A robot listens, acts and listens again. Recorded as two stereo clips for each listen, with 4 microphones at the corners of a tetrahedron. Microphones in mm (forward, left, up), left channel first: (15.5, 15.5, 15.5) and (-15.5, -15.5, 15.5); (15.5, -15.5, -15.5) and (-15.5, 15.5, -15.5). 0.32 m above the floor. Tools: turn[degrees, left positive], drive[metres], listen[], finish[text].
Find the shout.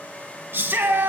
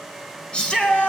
Thought: The shout: 110° right.
Action: turn[-110]
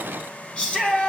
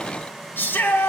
Thought: The shout is now 15° right.
Action: turn[-15]
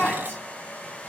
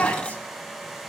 Action: finish[Found it: a shout, straight ahead.]